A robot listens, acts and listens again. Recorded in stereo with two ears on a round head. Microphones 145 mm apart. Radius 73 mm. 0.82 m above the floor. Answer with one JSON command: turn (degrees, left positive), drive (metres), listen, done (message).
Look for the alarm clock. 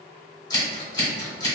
{"listen": true}
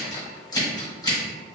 {"listen": true}
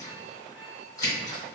{"done": "I can't make out an alarm clock to turn to."}